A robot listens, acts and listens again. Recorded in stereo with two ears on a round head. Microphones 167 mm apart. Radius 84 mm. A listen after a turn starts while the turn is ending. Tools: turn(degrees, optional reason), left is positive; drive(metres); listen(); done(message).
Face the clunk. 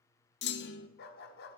turn(degrees=60, reason="The clunk: about 60° left or 120° left.")
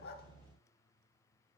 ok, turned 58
listen()
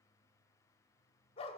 done("I heard a clunk, but can't make it out now. It was about 5° left or 60° left.")